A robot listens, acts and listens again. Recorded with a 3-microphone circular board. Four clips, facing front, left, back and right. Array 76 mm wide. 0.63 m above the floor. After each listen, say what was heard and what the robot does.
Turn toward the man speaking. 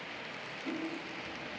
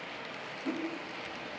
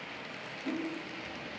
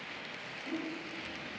Keep listening.
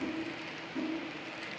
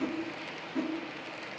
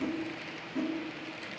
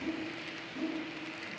Keep listening.
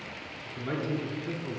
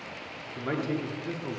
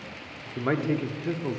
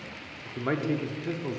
The man speaking: 165° right. Turn 165° right.
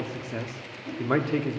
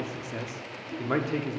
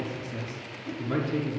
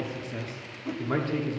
Found it: a man speaking, straight ahead.